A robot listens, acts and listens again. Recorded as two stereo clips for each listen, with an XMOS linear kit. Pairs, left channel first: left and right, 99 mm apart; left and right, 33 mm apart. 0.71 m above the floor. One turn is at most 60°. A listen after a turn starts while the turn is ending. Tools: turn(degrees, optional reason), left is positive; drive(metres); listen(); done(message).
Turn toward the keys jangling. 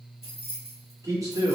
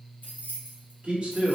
turn(degrees=60, reason="The keys jangling: about 75° left or 105° left.")
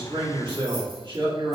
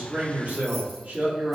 listen()
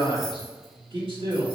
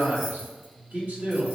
listen()
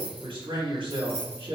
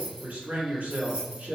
turn(degrees=-25, reason="So it is at 25° right.")
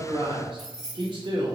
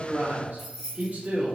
done("Found it: keys jangling, straight ahead.")